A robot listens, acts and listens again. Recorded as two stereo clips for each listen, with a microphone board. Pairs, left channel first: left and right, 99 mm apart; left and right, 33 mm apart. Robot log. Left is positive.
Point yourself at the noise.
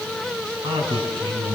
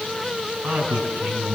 note: The man speaking: about 65° right or 115° right.
cmd yaw -65
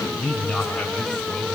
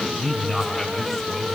end: Facing the man speaking, 2 to 4 m away.